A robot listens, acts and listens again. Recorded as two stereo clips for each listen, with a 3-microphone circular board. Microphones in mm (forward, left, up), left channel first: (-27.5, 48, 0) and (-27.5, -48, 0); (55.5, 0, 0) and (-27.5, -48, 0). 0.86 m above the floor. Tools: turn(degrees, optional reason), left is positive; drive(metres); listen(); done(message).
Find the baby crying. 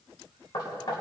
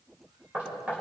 listen()
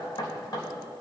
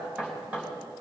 listen()
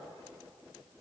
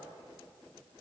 done("I can't make out a baby crying, only knocking.")